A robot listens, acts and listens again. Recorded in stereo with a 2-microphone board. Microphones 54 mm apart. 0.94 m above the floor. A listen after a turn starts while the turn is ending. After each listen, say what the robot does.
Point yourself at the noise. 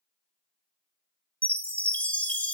Turn 30° left.
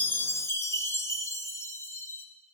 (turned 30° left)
Turn 120° left.
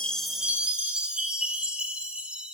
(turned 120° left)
Turn 20° right.
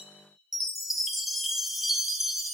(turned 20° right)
Found it: a chime, straight ahead, under 1 m away.